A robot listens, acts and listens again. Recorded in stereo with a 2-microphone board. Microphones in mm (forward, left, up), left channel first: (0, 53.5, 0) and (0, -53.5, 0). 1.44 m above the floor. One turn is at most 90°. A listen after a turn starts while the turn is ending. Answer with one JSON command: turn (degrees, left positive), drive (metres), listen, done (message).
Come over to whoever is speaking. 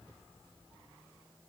{"listen": true}
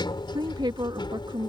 {"turn": -45}
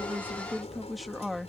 {"drive": 1.0}
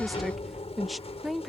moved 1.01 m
{"drive": 1.0}
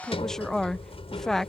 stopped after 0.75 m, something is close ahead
{"done": "Arrived at the woman speaking, straight ahead."}